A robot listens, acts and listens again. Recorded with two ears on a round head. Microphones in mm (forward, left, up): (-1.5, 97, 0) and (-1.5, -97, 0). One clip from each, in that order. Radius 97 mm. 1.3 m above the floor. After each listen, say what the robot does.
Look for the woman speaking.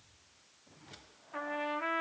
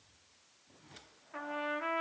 Keep listening.
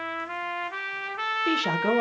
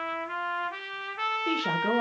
Turn 20° left.
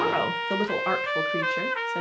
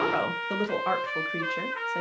Found it: a woman speaking, straight ahead.